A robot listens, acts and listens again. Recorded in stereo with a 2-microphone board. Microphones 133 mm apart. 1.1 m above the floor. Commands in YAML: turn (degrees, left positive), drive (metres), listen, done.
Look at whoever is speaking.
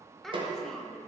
turn: 30
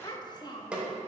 turn: 150
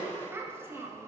turn: -15
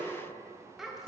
done: "Found it: a child speaking, straight ahead."